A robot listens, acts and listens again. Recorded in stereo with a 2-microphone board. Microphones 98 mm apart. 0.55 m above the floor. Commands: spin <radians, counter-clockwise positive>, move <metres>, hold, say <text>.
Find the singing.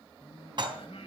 spin 1.22
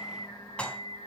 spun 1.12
spin 0.96
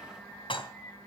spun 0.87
spin 0.44
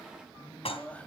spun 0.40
spin 0.26
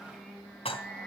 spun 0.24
say Facing the singing, 2 to 4 m away.